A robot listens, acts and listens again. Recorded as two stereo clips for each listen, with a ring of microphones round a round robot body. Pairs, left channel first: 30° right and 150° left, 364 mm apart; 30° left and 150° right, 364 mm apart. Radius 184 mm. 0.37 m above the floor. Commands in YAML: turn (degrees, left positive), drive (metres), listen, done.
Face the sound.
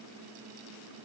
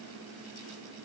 listen: true
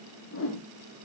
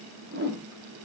turn: -85
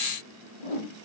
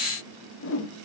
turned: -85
turn: -30
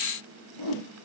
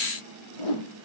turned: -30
turn: 10
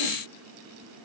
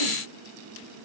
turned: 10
listen: true
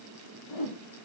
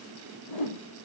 done: "Facing the whoosh, over 4 m away."